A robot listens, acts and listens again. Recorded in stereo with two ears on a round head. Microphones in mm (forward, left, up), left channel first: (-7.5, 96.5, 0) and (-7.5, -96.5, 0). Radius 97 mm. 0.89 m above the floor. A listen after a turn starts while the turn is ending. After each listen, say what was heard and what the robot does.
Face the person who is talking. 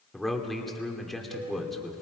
Turn 30° left.
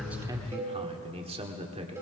So it is at 25° right. Turn 25° right.
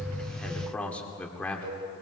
Found it: a man speaking, straight ahead.